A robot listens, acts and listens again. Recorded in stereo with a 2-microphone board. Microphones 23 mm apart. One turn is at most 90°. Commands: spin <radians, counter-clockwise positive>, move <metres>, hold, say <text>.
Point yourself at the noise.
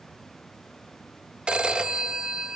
spin -0.70
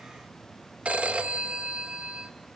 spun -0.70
spin -1.57
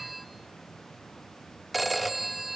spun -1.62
say Facing the phone ringing.